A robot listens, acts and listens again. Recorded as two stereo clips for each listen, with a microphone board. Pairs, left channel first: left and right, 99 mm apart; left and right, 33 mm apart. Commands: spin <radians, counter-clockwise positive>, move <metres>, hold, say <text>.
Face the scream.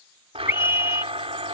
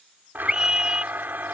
spin -0.44
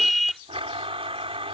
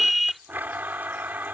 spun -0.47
say Facing the scream.